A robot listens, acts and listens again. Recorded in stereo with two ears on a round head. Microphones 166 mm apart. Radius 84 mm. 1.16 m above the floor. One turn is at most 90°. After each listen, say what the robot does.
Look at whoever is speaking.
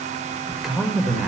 Turn 30° left.
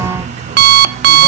Keep listening.
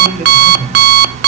Turn 35° right.
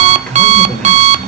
Facing the man speaking, over 4 m away.